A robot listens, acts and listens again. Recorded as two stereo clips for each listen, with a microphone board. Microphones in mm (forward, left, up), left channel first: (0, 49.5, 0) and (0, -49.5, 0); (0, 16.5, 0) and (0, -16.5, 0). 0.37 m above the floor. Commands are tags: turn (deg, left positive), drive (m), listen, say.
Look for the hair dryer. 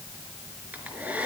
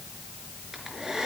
<turn deg="-15"/>
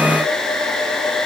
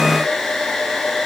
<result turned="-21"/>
<say>Facing the hair dryer, over 4 m away.</say>